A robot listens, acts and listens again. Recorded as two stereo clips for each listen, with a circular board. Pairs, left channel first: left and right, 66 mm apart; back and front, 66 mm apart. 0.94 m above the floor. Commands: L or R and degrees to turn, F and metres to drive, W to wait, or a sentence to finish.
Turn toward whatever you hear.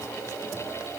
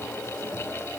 W
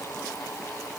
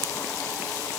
W
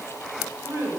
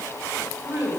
R50
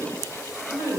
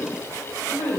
R20
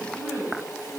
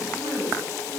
Found it: a woman speaking, straight ahead, 2 to 4 m away.